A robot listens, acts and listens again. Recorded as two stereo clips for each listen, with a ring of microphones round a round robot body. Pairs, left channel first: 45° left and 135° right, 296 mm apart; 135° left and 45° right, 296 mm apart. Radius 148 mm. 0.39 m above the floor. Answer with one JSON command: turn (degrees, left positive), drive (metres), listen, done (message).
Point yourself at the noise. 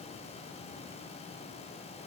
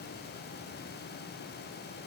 {"listen": true}
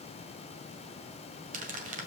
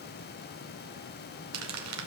{"turn": -75}
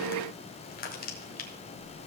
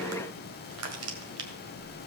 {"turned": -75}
{"turn": -15}
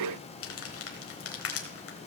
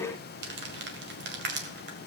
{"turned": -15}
{"done": "Found it: crumpling, straight ahead, 1 to 2 m away."}